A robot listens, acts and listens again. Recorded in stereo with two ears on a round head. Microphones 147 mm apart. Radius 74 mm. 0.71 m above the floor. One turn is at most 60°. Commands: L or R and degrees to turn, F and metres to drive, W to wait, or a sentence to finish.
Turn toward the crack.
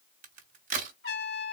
R50
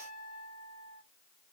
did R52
W
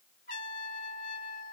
I heard a crack, but can't make it out now. It was about straight ahead or 80° right.